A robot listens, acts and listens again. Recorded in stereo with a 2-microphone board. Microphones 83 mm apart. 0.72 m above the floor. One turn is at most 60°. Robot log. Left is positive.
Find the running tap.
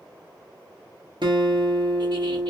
cmd idle
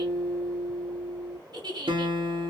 cmd idle
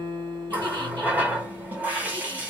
note: The running tap: about 20° right or 160° right.
cmd yaw -20
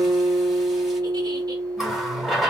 end: Found it: a running tap, straight ahead, under 1 m away.